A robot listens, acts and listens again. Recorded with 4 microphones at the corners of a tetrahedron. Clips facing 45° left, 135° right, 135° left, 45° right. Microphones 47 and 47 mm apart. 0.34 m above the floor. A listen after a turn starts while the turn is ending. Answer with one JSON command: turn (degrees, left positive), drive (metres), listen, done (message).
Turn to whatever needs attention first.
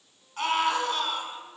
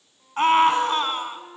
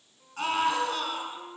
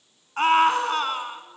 {"turn": -85}
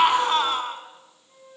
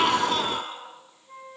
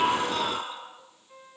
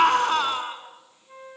{"done": "Found it: a scream, straight ahead, 2 to 4 m away."}